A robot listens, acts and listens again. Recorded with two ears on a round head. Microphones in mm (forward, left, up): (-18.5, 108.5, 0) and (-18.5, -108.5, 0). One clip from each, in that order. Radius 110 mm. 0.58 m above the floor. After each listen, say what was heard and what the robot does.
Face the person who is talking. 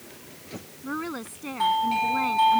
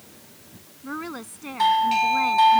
Turn 30° right.
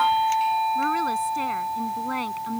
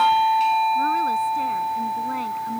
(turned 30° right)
Keep listening.
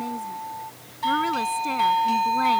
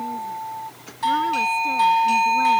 Keep listening.
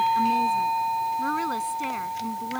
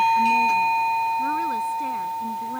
I heard a woman speaking, but can't make it out now. It was about 20° left or 140° right.